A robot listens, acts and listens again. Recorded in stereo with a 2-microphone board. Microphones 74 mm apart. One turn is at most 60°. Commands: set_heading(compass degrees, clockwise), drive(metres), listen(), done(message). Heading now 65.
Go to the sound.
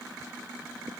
listen()
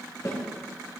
set_heading(15)
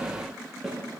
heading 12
drive(1.0)
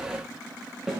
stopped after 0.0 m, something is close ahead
done("Blocked. The snare drum is further on, straight ahead.")